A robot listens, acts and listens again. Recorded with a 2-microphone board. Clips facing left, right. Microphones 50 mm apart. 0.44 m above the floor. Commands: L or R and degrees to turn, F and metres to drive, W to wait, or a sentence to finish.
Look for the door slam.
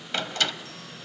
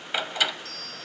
R30
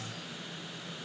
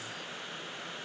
W
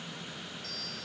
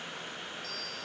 I heard a door slam, but can't make it out now. It was about 20° left or 140° right.